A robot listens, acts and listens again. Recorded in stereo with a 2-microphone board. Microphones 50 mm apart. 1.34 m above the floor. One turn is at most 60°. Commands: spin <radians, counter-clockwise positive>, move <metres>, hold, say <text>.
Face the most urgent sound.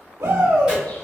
spin -1.05
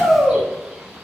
spin -0.35
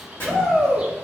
say Found it: a shout, straight ahead, 1 to 2 m away.